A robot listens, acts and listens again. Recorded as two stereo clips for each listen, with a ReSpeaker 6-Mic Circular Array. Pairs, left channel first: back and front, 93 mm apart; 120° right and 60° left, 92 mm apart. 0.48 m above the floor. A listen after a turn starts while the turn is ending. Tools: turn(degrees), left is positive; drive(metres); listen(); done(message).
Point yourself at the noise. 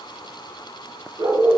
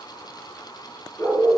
turn(degrees=-60)
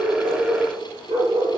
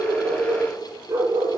done("Found it: a dog barking, straight ahead, 2 to 4 m away.")